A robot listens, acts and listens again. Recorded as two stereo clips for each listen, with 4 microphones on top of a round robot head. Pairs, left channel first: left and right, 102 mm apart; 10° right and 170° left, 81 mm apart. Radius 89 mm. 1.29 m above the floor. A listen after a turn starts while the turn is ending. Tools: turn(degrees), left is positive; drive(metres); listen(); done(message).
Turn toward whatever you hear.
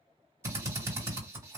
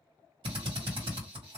turn(degrees=-150)
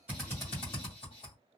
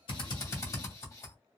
turn(degrees=40)
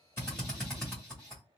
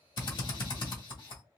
done("Found it: a drill, straight ahead, 1 to 2 m away.")